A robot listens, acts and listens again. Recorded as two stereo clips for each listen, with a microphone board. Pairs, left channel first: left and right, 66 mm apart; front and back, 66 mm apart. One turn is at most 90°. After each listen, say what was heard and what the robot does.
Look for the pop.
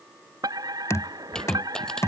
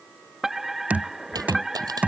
The pop: 170° left. Turn 90° left.
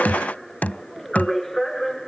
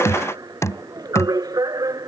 Nothing new. It was at 80° left. Turn 80° left.
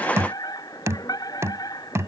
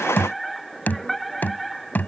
I heard a pop from this way, but can't make it out now.